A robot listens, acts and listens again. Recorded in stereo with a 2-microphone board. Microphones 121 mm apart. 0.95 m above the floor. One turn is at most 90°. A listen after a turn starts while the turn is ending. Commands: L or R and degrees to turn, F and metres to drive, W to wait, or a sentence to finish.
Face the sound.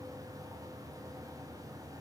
W
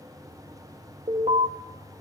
R60
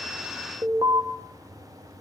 R40
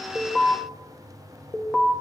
Found it: an alarm, straight ahead, 1 to 2 m away.